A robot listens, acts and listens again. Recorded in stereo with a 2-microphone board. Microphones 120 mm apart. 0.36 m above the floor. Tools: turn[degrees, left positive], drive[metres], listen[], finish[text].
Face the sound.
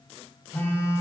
Thought: The phone buzzing: about 20° left or 160° left.
Action: turn[20]
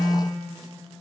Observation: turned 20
Action: finish[Found it: a phone buzzing, straight ahead, 1 to 2 m away.]